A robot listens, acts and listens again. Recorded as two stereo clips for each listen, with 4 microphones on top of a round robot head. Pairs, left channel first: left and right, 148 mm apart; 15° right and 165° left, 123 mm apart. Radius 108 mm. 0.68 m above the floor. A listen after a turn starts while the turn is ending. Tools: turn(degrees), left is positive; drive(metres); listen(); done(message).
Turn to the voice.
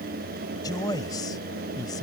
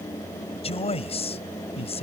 turn(degrees=20)
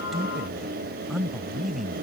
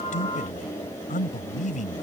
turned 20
done("Found it: a man speaking, straight ahead.")